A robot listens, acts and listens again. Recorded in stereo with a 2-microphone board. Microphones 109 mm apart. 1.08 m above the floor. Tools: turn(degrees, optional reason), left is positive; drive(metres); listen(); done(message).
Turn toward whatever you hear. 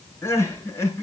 turn(degrees=20, reason="The crying: about 20° left or 160° left.")
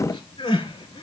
turn(degrees=135, reason="So it is at 135° left.")
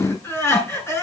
turn(degrees=25, reason="The crying is now 25° left.")
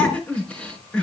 turn(degrees=10, reason="The crying is now 10° left.")
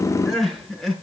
done("Facing the crying.")